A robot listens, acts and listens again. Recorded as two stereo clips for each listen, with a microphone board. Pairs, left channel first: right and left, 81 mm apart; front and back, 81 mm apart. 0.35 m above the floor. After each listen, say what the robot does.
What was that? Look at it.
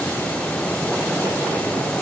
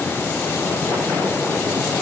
Keep listening.
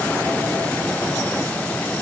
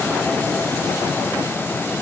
Keep listening.
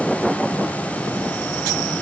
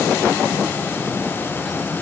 I can't make out anything.